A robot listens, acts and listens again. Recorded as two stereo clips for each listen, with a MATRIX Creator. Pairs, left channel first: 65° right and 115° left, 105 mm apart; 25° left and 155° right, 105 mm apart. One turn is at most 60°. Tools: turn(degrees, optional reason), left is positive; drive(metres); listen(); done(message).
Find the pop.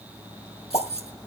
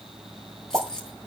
turn(degrees=-60, reason="The pop: 95° right.")
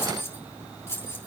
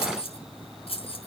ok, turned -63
turn(degrees=-35, reason="Nothing new. It was at 35° right.")
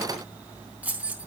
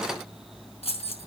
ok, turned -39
done("Facing where the pop came from. I can't hear it now.")